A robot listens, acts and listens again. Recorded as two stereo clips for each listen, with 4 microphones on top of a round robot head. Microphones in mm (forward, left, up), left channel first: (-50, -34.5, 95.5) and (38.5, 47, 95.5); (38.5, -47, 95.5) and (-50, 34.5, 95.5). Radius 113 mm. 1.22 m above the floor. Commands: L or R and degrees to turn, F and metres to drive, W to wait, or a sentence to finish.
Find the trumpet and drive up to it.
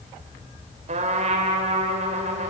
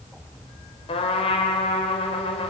F1.0
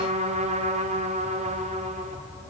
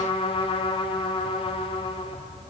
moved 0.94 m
F1.0
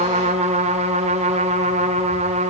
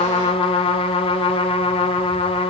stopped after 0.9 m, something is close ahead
Arrived at the trumpet, straight ahead.